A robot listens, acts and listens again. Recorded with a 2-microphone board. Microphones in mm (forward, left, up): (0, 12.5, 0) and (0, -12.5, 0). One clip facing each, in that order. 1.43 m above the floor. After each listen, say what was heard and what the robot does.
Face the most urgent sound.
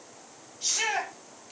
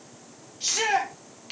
The shout: about 40° right or 140° right. Turn 40° right.
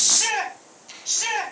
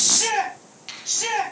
Facing the shout.